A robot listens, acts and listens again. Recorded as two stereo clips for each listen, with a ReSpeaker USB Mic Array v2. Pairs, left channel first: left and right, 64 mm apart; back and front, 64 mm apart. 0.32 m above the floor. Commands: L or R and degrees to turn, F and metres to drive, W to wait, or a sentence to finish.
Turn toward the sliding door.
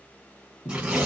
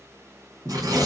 L65
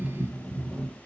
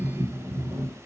Facing the sliding door.